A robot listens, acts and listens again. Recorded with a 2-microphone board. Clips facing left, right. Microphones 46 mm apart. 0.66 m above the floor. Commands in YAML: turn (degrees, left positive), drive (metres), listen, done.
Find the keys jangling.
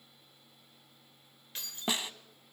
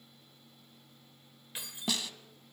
turn: -30
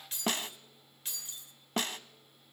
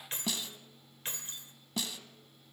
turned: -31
turn: -135
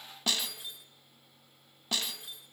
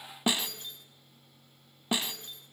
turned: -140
done: "Found it: keys jangling, straight ahead, 1 to 2 m away."